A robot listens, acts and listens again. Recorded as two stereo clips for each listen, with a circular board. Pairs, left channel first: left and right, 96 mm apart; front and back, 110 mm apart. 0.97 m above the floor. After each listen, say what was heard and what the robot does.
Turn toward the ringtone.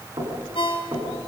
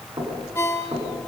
The ringtone: 65° left. Turn 65° left.
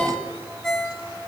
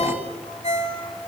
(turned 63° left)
Found it: a ringtone, straight ahead, 2 to 4 m away.